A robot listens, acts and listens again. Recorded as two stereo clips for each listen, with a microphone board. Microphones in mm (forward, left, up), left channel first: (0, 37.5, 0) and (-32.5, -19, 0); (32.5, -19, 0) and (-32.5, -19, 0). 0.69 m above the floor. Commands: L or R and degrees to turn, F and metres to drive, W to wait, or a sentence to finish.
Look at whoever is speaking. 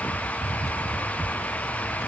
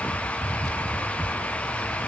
W
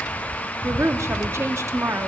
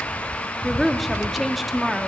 R90
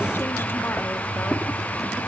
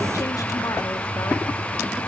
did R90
W
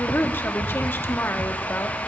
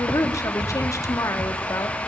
L10
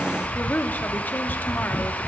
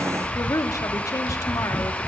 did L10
Facing the woman speaking, under 1 m away.